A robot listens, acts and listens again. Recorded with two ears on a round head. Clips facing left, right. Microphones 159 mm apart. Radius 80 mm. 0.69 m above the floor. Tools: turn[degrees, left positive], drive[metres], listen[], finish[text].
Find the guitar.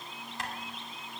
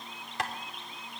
Action: listen[]
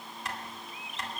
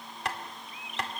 Action: listen[]
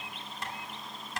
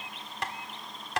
Action: finish[I can't make out a guitar, only tapping.]